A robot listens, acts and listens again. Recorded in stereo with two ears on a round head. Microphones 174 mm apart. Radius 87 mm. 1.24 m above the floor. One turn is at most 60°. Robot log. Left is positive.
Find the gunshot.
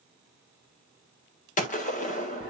note: The gunshot: about 40° left or 140° left.
cmd yaw +40
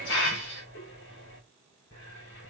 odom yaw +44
cmd idle
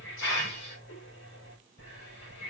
end: I heard a gunshot, but can't make it out now. It was about 5° right or 95° left.